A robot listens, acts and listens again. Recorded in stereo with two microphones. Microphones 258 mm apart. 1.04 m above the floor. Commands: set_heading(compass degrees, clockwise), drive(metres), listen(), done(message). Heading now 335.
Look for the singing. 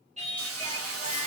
set_heading(5)
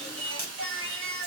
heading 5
set_heading(125)
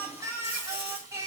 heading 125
set_heading(135)
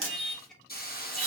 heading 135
done("Found it: singing, straight ahead.")